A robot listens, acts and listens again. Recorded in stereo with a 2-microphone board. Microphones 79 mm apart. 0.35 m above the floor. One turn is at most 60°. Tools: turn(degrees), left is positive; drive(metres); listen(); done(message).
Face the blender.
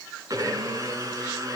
turn(degrees=-40)
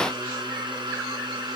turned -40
turn(degrees=-60)
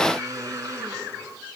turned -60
turn(degrees=-45)
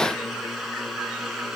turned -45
done("Facing the blender, 2 to 4 m away.")